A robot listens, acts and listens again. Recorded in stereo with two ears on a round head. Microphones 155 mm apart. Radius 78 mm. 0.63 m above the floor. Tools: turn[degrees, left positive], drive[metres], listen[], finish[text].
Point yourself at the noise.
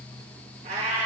Thought: The cat meowing: about 40° right or 140° right.
Action: turn[-40]
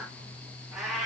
Action: finish[Found it: a cat meowing, straight ahead, 2 to 4 m away.]